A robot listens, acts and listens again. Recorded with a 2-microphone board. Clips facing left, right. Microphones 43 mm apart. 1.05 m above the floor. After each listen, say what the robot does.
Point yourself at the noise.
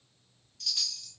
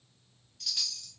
Turn 30° right.
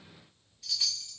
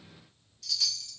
Turn 20° left.
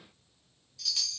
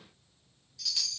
Found it: a chime, straight ahead.